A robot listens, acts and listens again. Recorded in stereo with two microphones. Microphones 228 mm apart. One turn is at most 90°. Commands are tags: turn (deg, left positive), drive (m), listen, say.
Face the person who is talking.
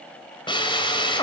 <listen/>
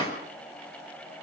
<listen/>
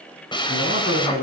<turn deg="65"/>
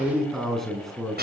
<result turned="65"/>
<say>Found it: a man speaking, straight ahead, over 4 m away.</say>